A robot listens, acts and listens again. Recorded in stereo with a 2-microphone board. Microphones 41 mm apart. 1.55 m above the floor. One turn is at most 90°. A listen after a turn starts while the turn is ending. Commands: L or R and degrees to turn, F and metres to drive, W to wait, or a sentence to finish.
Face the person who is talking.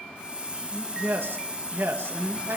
R70
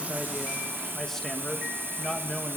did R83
L10
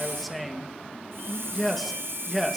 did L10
Facing the man speaking, 2 to 4 m away.